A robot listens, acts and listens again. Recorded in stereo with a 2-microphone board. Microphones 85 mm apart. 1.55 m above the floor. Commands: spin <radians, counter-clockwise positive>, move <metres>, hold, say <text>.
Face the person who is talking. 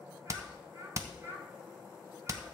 spin -0.61
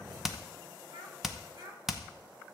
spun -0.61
spin -2.18
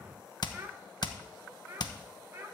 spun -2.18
spin -0.44
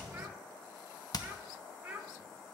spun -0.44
spin -0.26
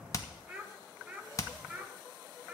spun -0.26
say Found it: a child speaking, straight ahead.